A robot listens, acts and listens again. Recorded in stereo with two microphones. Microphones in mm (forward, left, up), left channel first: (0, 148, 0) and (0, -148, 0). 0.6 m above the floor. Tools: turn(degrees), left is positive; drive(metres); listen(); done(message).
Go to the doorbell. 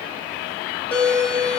turn(degrees=30)
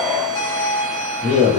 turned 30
turn(degrees=-25)
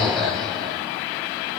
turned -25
drive(metres=1.0)
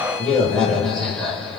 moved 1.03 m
drive(metres=1.0)
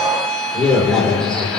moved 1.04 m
drive(metres=1.0)
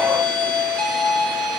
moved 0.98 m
drive(metres=1.0)
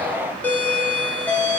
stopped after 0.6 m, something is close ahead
turn(degrees=10)
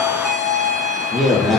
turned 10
done("I am next to the doorbell.")